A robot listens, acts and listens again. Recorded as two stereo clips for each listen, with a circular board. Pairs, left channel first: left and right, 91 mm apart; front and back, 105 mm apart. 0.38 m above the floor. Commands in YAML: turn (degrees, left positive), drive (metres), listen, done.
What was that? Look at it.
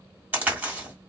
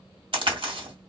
turn: -155
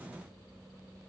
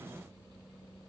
done: "Facing where the crack came from. I can't hear it now."